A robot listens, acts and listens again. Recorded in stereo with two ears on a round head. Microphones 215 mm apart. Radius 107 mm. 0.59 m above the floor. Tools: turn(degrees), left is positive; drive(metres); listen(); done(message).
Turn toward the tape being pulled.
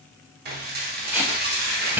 turn(degrees=-30)
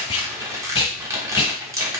turn(degrees=25)
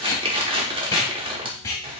turn(degrees=15)
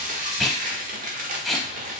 done("Found it: tape being pulled, straight ahead.")